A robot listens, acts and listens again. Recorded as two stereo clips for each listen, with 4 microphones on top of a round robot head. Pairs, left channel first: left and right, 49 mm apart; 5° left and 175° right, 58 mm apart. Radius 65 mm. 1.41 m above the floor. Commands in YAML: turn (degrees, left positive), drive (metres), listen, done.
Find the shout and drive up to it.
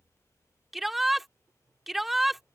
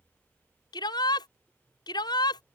drive: 1.0
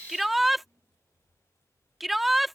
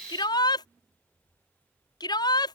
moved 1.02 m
drive: 1.0
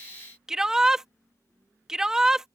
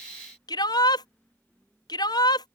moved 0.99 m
turn: -10
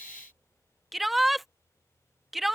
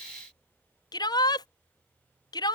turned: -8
drive: 1.0
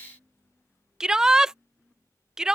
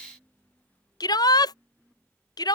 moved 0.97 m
turn: -10
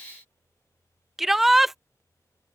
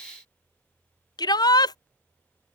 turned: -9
drive: 1.0
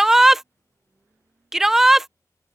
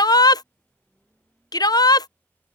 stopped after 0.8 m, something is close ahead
done: "Arrived at the shout, straight ahead."